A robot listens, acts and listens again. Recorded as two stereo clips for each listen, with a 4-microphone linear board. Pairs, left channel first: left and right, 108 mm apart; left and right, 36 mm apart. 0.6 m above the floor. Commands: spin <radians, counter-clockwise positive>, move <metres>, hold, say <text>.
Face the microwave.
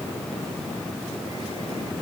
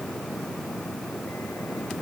hold
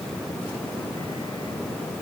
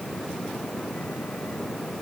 hold
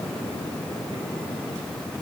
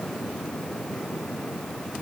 say I can't make out a microwave to turn to.